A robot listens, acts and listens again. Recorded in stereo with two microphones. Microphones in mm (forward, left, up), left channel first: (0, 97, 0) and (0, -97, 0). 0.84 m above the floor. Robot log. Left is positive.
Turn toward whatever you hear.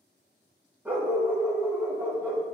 cmd yaw -30
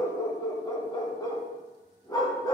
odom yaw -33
note: So it is at 20° left.
cmd yaw +20
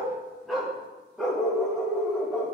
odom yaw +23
end: Found it: a dog barking, straight ahead, 1 to 2 m away.